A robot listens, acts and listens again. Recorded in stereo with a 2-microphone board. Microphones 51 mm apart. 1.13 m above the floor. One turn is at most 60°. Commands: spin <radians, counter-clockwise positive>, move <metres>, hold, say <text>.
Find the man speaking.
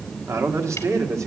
spin -1.05
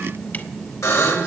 spin -0.52
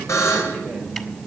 hold
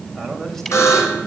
say Facing where the man speaking came from. I can't hear it now.